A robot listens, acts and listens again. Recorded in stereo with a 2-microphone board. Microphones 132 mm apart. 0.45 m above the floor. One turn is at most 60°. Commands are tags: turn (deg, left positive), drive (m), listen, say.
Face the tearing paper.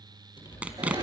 <turn deg="-30"/>
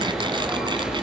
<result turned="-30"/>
<listen/>
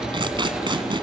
<turn deg="-60"/>
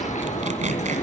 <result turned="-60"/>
<turn deg="-60"/>
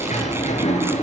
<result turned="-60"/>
<turn deg="-25"/>
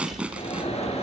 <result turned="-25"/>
<turn deg="-10"/>
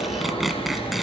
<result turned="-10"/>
<say>Facing the tearing paper.</say>